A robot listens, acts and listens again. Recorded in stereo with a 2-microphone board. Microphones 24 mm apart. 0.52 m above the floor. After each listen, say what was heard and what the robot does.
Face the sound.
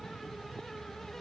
Keep listening.
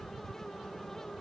Keep listening.
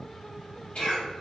The cough: about 60° left or 120° left. Turn 60° left.
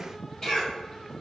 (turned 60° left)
So it is at 40° left. Turn 40° left.
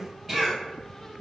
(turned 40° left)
Found it: a cough, straight ahead, 1 to 2 m away.